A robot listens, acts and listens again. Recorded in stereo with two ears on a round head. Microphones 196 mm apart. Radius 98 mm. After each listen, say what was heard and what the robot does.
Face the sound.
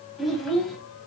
Turn 30° left.
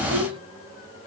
So it is at 25° right. Turn 25° right.
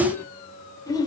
The child speaking is now 20° left. Turn 20° left.
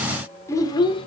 The child speaking is now 25° left. Turn 25° left.
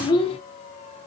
The child speaking is now 25° left. Turn 25° left.
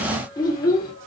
The child speaking is now 20° left. Turn 20° left.
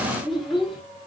Facing the child speaking.